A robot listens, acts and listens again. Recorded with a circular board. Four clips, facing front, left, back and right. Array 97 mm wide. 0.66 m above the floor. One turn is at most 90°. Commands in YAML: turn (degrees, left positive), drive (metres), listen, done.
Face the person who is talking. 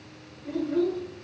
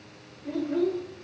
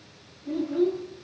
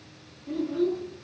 turn: 55
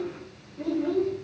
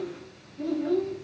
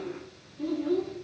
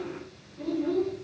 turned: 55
done: "Facing the child speaking, 1 to 2 m away."